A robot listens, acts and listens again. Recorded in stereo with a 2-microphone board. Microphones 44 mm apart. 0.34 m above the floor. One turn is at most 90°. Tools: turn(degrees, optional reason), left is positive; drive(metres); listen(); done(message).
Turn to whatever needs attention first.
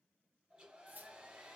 listen()
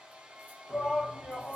turn(degrees=25, reason="The shout: about 25° left or 155° left.")
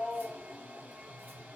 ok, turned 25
done("Facing the shout.")